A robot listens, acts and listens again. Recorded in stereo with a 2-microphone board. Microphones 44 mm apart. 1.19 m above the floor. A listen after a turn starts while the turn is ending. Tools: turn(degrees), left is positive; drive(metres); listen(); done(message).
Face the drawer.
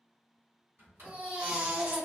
turn(degrees=-50)
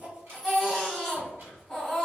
turn(degrees=-70)
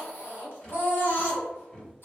turn(degrees=15)
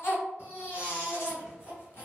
listen()
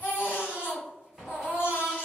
done("Facing the drawer.")